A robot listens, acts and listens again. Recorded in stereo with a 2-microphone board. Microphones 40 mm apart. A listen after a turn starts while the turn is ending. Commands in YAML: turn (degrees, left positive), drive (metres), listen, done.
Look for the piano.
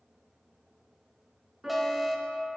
turn: -30
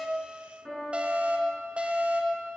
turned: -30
turn: 25
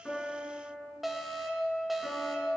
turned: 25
done: "Found it: a piano, straight ahead, over 4 m away."